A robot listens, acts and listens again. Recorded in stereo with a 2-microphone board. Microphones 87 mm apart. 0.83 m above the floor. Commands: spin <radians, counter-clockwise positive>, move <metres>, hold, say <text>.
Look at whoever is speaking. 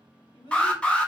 spin 1.13
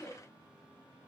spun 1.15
spin 0.26
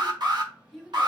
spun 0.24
say Found it: a child speaking, straight ahead.